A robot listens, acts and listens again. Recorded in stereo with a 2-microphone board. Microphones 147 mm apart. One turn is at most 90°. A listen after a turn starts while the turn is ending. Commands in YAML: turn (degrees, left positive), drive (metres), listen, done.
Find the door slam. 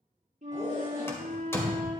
turn: 15
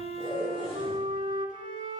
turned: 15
listen: true
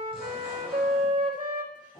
done: "I heard a door slam, but can't make it out now. It was about straight ahead or 150° left."